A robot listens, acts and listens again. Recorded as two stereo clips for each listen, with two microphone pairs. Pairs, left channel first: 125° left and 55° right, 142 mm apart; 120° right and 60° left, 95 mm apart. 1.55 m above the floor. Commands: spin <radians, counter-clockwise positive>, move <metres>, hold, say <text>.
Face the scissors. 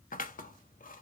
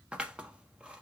spin 2.36
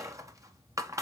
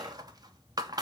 spin 0.26
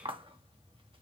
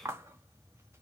say Found it: scissors, straight ahead, 1 to 2 m away.